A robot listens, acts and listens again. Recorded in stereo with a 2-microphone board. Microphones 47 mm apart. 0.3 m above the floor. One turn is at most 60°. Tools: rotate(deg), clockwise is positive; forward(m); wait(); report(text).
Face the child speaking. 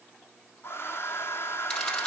wait()
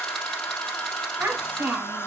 rotate(50)
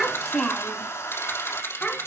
rotate(-30)
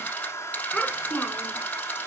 rotate(-15)
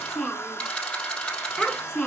report("Facing the child speaking.")